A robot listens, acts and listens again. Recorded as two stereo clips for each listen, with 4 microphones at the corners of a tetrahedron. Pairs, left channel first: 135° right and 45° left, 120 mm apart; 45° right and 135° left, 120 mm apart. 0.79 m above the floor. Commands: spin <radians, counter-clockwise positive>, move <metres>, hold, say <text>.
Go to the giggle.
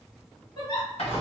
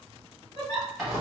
spin -1.48
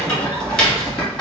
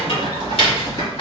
hold
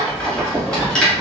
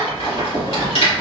hold
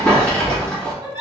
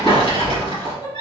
move 1.0
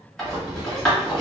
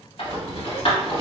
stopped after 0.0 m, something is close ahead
hold
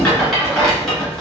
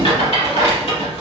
hold
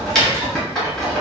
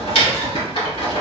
say I heard a giggle from this way, but can't make it out now. I did not reach it.